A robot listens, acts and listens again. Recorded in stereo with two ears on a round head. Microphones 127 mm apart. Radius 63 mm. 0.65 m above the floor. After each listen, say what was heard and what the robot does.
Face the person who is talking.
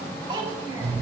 The child speaking: about 30° right or 150° right. Turn 30° right.
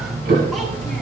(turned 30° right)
Keep listening.
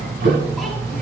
Keep listening.
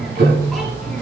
I heard a child speaking, but can't make it out now. It was about straight ahead or 120° right.